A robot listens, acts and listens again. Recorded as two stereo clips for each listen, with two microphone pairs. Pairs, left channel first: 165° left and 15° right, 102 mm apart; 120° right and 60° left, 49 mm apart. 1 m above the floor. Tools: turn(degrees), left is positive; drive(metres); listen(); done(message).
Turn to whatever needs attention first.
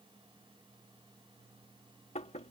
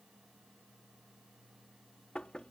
listen()
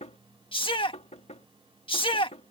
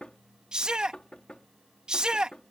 turn(degrees=130)
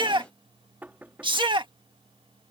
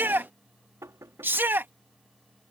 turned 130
turn(degrees=20)
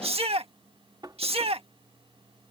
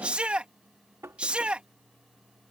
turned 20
done("Found it: a shout, straight ahead.")